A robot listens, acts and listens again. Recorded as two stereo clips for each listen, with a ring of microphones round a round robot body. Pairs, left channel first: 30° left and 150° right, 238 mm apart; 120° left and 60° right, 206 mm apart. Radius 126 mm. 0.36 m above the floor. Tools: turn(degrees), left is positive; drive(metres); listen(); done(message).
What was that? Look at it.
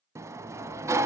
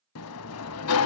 turn(degrees=130)
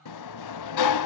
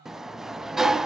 turn(degrees=30)
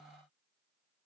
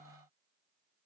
listen()
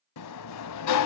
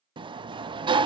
turn(degrees=10)
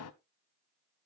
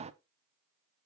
done("Facing the sliding door, under 1 m away.")